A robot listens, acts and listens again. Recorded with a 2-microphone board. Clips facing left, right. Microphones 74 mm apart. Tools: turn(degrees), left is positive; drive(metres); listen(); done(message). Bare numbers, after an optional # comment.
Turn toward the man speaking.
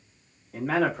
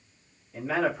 # The man speaking: about 60° left or 120° left.
turn(60)
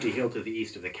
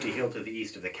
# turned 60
# So it is at 10° right.
turn(-10)
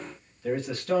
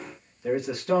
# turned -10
# The man speaking is now 25° right.
turn(-25)
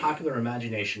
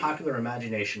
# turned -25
# The man speaking is now 25° right.
turn(-25)
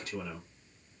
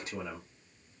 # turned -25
# The man speaking is now 30° right.
turn(-30)
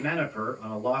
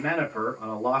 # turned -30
# The man speaking is now 25° right.
turn(-25)
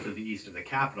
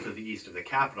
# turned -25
done("Found it: a man speaking, straight ahead, 1 to 2 m away.")